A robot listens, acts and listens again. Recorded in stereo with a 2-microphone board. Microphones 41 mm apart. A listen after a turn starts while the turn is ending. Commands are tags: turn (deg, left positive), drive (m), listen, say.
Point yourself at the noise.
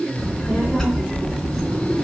<turn deg="30"/>
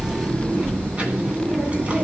<turn deg="-35"/>
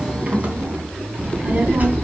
<turn deg="-45"/>
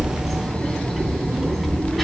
<say>Found it: a child speaking, straight ahead, 2 to 4 m away.</say>